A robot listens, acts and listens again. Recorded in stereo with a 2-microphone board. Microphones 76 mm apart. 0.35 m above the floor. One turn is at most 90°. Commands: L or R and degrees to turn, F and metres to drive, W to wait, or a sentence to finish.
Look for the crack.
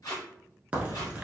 R20
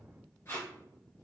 W
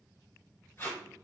I heard a crack, but can't make it out now. It was about straight ahead or 140° right.